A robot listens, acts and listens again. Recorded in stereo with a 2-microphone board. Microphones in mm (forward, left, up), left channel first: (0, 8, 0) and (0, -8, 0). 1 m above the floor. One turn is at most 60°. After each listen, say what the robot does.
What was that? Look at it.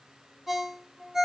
Turn 20° right.
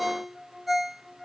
Found it: a ringtone, straight ahead, 1 to 2 m away.